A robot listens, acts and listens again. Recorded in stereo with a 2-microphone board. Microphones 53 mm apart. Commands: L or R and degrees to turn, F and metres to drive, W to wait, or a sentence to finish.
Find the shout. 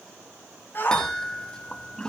L45
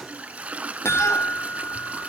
W
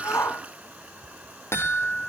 L90
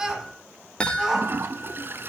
R15
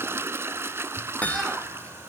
W
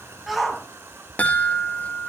Facing the shout, over 4 m away.